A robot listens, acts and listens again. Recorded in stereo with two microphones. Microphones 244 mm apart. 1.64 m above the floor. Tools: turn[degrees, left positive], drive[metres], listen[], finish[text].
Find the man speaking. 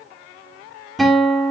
Action: listen[]
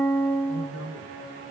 Action: turn[-90]
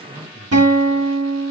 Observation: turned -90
Action: listen[]
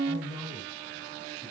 Action: finish[Found it: a man speaking, straight ahead, over 4 m away.]